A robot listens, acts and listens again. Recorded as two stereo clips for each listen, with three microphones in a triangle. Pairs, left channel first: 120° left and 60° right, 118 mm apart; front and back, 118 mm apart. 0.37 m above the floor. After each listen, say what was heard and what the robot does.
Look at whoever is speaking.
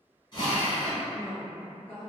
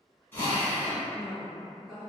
The woman speaking: 20° left. Turn 20° left.
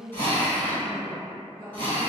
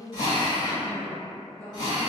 Facing the woman speaking.